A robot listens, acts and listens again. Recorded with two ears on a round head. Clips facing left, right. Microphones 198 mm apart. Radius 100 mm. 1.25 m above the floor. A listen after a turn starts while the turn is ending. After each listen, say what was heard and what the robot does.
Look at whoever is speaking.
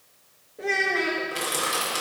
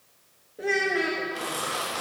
Turn 30° right.
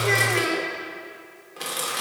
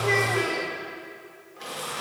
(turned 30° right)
So it is at 30° left. Turn 30° left.
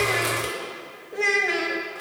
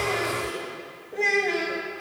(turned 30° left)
Facing the child speaking.